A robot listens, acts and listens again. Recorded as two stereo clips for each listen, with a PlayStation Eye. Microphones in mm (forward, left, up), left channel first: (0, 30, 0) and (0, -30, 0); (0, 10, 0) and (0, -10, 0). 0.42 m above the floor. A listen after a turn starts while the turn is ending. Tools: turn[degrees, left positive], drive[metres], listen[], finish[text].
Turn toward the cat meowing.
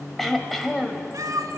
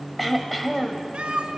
Action: turn[-90]
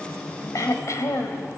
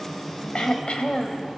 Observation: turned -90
Action: listen[]
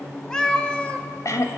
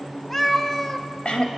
Thought: The cat meowing is now 20° left.
Action: turn[20]
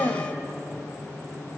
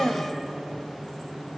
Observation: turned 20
Action: listen[]
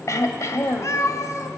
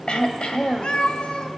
Thought: The cat meowing is now 60° left.
Action: turn[60]
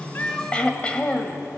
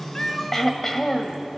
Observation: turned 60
Action: listen[]
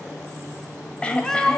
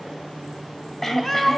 Thought: The cat meowing is now 10° left.
Action: turn[10]
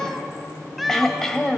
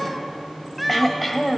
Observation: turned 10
Action: finish[Found it: a cat meowing, straight ahead.]